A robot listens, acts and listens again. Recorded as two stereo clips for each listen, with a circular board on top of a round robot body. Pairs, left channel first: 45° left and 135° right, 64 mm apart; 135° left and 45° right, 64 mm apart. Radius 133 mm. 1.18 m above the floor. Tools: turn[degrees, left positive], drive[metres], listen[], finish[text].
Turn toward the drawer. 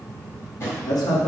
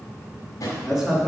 Thought: The drawer: 95° left.
Action: turn[95]
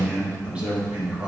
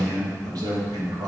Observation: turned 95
Action: listen[]
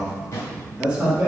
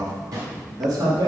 Thought: The drawer is now 10° right.
Action: turn[-10]
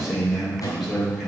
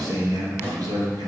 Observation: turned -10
Action: finish[Facing the drawer, 1 to 2 m away.]